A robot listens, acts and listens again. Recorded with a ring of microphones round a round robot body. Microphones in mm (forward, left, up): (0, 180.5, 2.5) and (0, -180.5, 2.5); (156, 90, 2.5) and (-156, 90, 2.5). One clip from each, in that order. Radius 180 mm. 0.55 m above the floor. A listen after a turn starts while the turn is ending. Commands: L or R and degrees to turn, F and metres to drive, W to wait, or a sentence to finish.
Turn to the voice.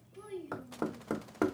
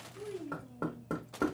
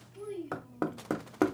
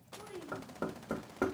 L70
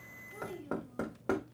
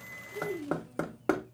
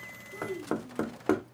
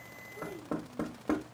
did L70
L10
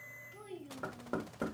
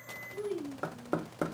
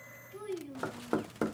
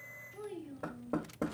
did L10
Facing the child speaking.